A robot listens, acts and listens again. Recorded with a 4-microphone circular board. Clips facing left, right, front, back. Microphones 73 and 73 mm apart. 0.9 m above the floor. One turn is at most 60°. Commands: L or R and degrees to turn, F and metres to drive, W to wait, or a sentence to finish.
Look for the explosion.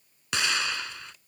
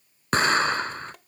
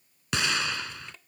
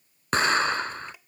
R60
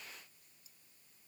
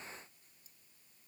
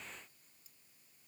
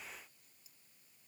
R60
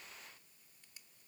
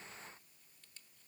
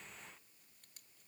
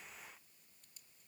R15
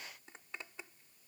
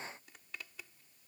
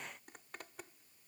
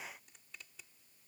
Facing where the explosion came from. I can't hear it now.